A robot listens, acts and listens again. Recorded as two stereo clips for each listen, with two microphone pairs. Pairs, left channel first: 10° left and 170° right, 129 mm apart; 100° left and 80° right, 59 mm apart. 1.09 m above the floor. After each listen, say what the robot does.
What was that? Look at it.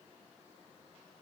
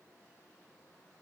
Keep listening.
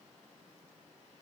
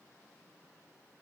Keep listening.
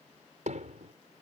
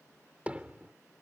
Turn 150° right.
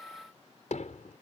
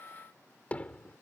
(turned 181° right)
Turn 30° left.
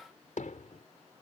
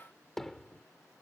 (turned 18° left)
Turn 15° left.
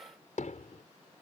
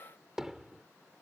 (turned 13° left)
Facing the hammering.